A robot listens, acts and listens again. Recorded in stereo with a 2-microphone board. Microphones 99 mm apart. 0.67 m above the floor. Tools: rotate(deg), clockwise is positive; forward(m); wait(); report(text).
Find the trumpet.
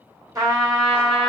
rotate(30)
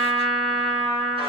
rotate(120)
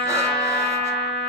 rotate(-10)
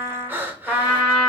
report("Found it: a trumpet, straight ahead, 1 to 2 m away.")